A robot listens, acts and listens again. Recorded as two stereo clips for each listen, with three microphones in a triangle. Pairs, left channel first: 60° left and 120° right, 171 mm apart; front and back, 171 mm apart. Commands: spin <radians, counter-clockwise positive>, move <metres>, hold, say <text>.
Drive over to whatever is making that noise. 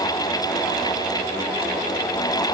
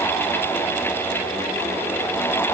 hold
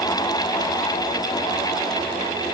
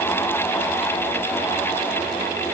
hold
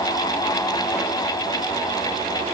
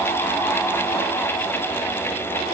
say I can't make out anything to turn to.